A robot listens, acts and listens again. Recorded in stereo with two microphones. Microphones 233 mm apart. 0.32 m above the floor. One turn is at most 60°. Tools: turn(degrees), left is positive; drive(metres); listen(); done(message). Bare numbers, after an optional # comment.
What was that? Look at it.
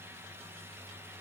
listen()
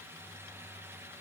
listen()
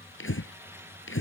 # The breathing: about 65° left or 115° left.
turn(60)
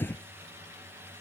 # So it is at 10° left.
turn(10)
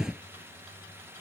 done("Facing the breathing.")